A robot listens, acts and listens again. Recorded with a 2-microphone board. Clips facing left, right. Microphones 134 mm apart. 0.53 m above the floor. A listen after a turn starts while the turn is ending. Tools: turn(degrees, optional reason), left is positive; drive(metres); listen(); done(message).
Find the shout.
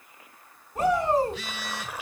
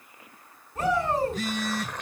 turn(degrees=30, reason="The shout: about 30° left or 150° left.")
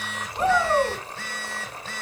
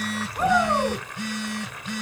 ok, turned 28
done("Facing the shout, over 4 m away.")